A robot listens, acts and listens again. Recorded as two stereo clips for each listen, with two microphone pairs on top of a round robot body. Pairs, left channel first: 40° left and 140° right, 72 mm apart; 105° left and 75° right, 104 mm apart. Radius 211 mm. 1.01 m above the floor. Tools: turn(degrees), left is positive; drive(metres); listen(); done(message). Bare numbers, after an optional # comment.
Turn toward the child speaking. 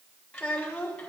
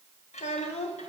# The child speaking: 120° left.
turn(120)
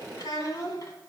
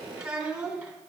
# The child speaking is now 10° left.
turn(10)
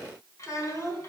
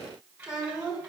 done("Found it: a child speaking, straight ahead, 2 to 4 m away.")